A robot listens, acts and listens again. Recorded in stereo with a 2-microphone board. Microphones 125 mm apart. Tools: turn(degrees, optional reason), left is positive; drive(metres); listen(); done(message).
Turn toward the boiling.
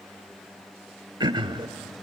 listen()
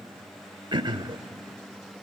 listen()
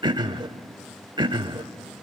done("I can't make out boiling, only throat clearing.")